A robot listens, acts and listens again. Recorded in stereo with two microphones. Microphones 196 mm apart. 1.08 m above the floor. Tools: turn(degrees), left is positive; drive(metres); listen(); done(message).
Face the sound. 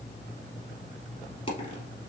turn(degrees=30)
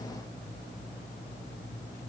listen()
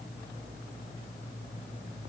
done("I heard a dropped coin, but can't make it out now. It was about straight ahead or 120° left.")